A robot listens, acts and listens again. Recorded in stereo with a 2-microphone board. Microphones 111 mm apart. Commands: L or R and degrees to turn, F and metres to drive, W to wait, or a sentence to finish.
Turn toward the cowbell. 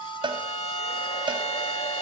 R45
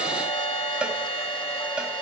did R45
R10
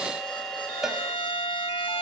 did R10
Facing the cowbell, 2 to 4 m away.